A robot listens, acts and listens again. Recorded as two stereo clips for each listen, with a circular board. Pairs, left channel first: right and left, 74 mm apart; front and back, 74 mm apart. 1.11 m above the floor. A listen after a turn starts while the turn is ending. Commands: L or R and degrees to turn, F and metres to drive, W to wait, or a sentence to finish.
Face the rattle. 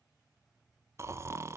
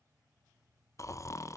W
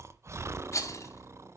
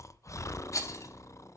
R45
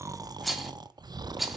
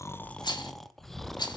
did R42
Facing the rattle, 2 to 4 m away.